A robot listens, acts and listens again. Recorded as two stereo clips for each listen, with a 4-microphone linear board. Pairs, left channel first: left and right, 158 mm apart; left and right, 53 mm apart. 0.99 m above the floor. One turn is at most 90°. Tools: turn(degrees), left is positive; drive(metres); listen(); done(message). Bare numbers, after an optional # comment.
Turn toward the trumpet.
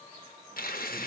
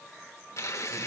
listen()
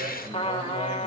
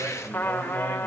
# The trumpet: about 40° left or 140° left.
turn(40)
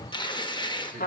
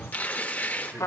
# So it is at 105° left.
turn(90)
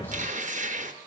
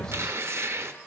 # Nothing new. It was at 15° left.
turn(15)
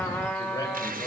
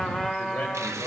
# The trumpet is now 10° left.
turn(10)
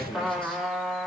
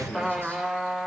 done("Found it: a trumpet, straight ahead, 1 to 2 m away.")